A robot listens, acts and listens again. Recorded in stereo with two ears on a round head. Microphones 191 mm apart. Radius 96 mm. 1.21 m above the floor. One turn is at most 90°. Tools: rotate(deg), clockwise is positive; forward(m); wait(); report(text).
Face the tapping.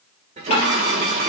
rotate(-30)
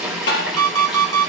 rotate(-90)
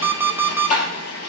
rotate(-35)
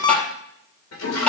report("Facing the tapping.")